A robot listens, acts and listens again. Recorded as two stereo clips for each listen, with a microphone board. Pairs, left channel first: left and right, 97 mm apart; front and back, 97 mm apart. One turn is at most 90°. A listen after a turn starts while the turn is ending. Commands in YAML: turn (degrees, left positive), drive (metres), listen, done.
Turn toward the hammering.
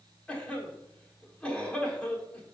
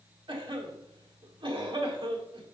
listen: true
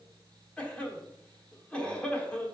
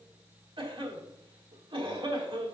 listen: true
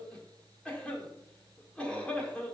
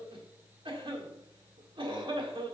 done: "I can't make out hammering to turn to."